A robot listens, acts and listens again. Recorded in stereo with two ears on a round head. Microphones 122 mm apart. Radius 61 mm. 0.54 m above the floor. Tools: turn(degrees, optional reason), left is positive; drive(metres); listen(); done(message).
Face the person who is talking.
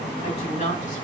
turn(degrees=60, reason="The woman speaking: about 60° left or 120° left.")
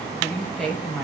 done("Facing the woman speaking.")